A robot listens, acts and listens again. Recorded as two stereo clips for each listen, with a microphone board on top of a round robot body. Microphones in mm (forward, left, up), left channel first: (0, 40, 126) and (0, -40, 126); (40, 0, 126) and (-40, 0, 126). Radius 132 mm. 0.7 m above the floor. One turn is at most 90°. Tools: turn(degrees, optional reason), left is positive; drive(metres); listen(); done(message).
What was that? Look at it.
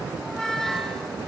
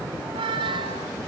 turn(degrees=90, reason="The squeak: 175° left.")
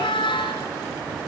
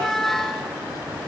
turn(degrees=85, reason="The squeak is now 85° left.")
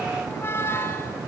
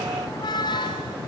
turn(degrees=30, reason="The squeak is now 30° left.")
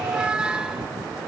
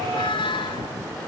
turn(degrees=-10, reason="The squeak is now 10° right.")
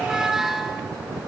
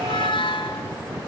done("Found it: a squeak, straight ahead.")